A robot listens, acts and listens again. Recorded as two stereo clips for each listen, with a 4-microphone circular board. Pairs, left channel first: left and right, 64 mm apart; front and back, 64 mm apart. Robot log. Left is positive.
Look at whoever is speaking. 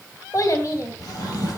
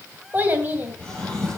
note: The child speaking: 120° left.
cmd yaw +120
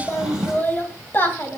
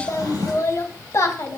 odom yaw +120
note: The child speaking is now 35° left.
cmd yaw +35
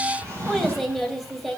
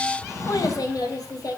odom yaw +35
end: Found it: a child speaking, straight ahead, 2 to 4 m away.